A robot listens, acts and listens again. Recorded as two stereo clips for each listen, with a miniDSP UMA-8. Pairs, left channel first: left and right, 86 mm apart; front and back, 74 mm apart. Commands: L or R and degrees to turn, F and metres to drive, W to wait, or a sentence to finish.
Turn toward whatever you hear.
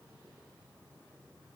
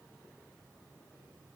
W
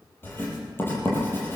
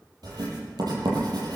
L155
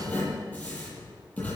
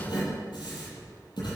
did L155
L15
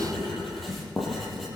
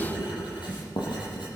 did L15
Found it: writing, straight ahead.